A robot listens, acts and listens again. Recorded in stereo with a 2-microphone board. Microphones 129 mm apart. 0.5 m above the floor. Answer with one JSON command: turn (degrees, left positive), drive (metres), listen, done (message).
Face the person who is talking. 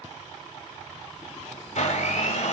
{"listen": true}
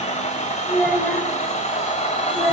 {"turn": 30}
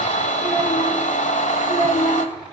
{"turn": 155}
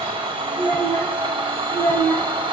{"turn": 20}
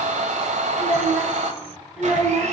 {"done": "Facing the child speaking, 2 to 4 m away."}